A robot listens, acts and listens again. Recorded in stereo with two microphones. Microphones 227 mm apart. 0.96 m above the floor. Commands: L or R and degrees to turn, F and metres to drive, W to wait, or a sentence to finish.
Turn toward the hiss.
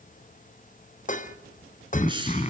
R20
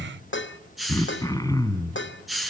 Facing the hiss, over 4 m away.